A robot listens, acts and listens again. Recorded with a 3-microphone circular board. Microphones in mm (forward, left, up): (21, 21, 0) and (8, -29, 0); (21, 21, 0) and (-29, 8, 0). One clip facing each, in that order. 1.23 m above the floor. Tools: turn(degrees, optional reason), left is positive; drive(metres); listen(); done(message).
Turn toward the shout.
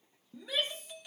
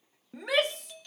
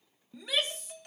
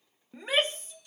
turn(degrees=-115, reason="The shout: 115° right.")
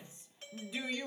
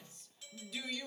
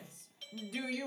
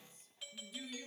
done("Facing the shout, 1 to 2 m away.")